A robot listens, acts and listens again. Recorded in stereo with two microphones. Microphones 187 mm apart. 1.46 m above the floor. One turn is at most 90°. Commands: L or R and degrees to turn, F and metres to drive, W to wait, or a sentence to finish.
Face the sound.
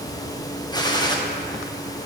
L20
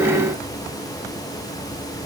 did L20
W
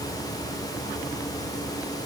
I heard a gunshot, but can't make it out now. It was about straight ahead or 140° left.